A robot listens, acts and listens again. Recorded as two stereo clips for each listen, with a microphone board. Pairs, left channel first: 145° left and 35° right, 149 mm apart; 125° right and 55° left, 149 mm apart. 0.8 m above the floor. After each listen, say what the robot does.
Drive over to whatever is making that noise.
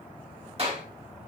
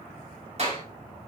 Turn 10° left.
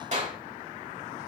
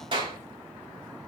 Drive 1.0 m forward.
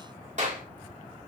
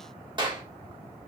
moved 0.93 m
Drive 1.0 m forward.
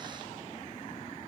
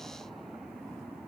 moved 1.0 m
Keep listening.
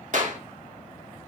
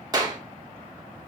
Drive 1.0 m forward.
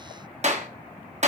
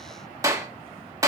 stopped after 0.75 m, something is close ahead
Turn 10° right.
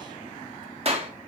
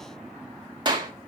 I am next to the clap.